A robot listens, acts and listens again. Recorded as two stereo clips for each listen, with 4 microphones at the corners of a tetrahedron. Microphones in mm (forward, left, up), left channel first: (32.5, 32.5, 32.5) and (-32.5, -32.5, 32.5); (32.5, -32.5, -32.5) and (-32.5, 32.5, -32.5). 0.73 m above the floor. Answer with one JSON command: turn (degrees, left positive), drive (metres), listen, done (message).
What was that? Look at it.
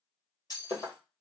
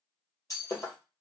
{"done": "Facing the breaking glass, 1 to 2 m away."}